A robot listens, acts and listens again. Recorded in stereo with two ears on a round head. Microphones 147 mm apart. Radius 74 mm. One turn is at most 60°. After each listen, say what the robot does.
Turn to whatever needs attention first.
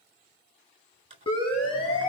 Turn 35° left.
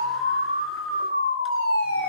Turn 60° left.
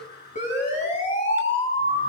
Turn 45° left.
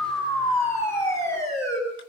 Turn 15° left.
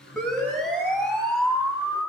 Facing the siren, over 4 m away.